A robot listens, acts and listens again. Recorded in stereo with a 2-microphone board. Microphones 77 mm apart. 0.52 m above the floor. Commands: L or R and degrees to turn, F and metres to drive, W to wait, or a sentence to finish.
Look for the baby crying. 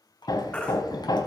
L15
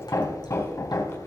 W
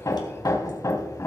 W
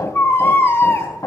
L150
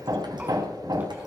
W
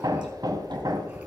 W
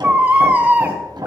R20
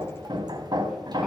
W
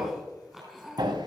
W
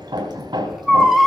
Facing the baby crying, 2 to 4 m away.